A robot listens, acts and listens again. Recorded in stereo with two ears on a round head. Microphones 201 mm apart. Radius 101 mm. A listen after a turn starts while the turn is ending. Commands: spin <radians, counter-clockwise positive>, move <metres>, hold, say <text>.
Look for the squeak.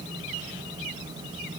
hold
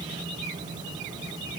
hold
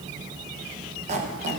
spin -0.52
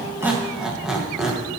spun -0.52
say Facing the squeak, under 1 m away.